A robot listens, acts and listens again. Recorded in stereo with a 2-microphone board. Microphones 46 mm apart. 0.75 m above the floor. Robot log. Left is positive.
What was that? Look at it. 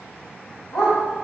cmd yaw +90
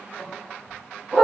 note: So it is at 15° right.
cmd yaw -15
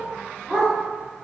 end: Found it: a dog barking, straight ahead, 2 to 4 m away.